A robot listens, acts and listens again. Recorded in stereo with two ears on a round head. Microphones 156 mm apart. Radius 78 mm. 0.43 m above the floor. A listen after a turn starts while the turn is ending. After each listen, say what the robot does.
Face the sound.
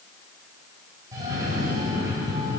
Turn 20° right.
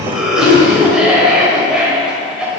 Facing the cough, 2 to 4 m away.